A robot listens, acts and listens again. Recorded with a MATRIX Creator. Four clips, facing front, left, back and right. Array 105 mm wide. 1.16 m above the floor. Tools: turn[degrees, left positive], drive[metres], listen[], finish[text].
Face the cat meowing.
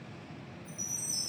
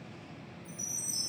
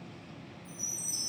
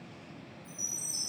Action: listen[]
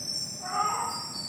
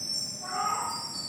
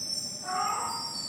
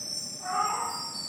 Thought: The cat meowing: 55° right.
Action: turn[-55]
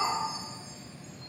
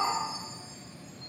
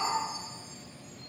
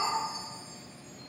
Thought: The cat meowing is now 15° left.
Action: turn[15]
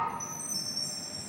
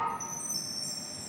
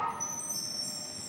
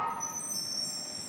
Action: finish[Found it: a cat meowing, straight ahead.]